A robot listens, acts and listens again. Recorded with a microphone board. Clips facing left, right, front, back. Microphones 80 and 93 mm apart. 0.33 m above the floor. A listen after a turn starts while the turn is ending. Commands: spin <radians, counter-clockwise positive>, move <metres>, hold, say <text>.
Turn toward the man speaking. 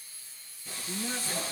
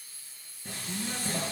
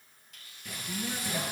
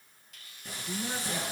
spin 2.71
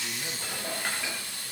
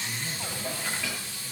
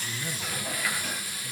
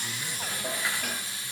hold
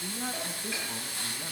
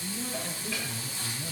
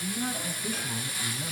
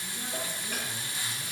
spin 0.96
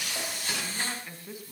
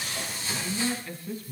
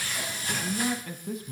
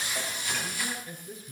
spin 0.26
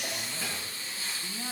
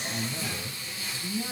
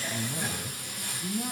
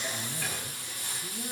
say Facing the man speaking.